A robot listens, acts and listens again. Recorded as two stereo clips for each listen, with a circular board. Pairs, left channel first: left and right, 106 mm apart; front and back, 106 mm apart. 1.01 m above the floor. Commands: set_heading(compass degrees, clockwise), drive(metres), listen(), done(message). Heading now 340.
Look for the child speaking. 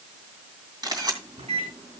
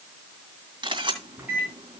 listen()
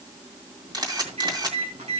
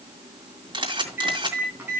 listen()
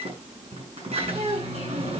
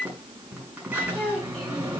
set_heading(65)
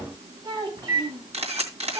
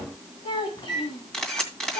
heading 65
set_heading(105)
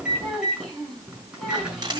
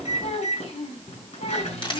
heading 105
done("Found it: a child speaking, straight ahead, over 4 m away.")